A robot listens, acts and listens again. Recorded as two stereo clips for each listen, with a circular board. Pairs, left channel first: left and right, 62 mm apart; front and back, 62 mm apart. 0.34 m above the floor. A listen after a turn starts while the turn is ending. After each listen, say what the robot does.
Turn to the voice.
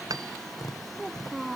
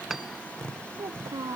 Turn 180° left.
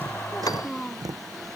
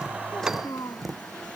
Turn 15° left.
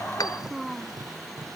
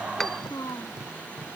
Found it: a child speaking, straight ahead.